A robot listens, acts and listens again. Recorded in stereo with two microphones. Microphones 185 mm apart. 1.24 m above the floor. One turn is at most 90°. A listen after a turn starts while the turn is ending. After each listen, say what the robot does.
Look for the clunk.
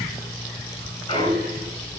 Turn 30° left.
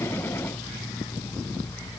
Keep listening.
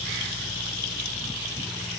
I heard a clunk, but can't make it out now. It was about straight ahead or 120° left.